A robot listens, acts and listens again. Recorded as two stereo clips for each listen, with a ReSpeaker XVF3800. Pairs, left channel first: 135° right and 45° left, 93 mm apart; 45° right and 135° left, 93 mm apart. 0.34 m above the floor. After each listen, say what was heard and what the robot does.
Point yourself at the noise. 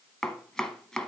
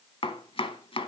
The chopping: 50° right. Turn 50° right.
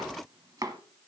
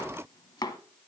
Found it: chopping, straight ahead.